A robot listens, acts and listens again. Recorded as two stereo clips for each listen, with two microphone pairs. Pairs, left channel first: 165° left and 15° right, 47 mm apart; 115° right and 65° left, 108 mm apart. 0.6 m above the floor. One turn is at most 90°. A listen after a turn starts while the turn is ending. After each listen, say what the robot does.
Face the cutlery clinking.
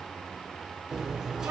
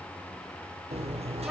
Turn 60° left.
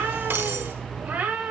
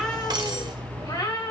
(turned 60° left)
Turn 20° left.
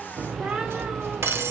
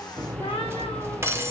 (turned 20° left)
Found it: cutlery clinking, straight ahead, 1 to 2 m away.